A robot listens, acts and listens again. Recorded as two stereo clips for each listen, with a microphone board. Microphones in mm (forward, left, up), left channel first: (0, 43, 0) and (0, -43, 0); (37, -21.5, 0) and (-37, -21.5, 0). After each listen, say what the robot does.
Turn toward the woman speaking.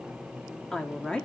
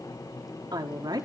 Turn 170° left.
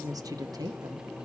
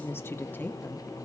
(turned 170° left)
Turn 60° right.
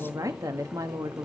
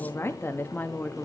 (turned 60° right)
Turn 65° right.
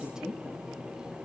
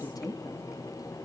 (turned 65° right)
Turn 10° right.
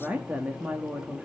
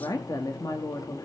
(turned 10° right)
Turn 20° right.
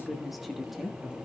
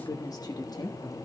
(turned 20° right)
Facing the woman speaking, 1 to 2 m away.